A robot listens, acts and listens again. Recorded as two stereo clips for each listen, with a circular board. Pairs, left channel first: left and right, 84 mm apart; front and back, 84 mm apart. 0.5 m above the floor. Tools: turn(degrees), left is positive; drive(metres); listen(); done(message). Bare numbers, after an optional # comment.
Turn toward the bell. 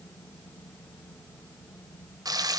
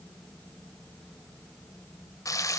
listen()
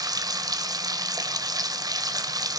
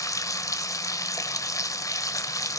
listen()
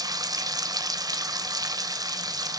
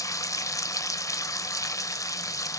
done("I can't make out a bell, only frying.")